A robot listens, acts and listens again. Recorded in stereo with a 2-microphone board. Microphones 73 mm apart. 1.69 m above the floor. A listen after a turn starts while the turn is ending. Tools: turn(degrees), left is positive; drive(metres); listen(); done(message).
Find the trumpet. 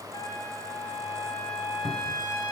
turn(degrees=70)
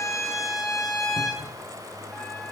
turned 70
done("Found it: a trumpet, straight ahead, 2 to 4 m away.")